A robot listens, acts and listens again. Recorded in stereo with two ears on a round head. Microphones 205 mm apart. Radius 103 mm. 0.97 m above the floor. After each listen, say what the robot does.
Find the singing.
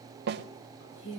Turn 55° left.
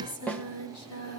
Turn 70° left.
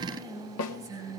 Turn 15° right.
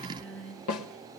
Found it: singing, straight ahead.